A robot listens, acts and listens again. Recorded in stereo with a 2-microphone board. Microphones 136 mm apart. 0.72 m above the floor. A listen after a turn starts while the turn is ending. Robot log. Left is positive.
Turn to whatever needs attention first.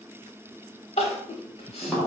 note: The crying: about 50° left or 130° left.
cmd yaw +50
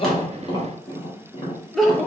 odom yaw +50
end: Facing the crying, under 1 m away.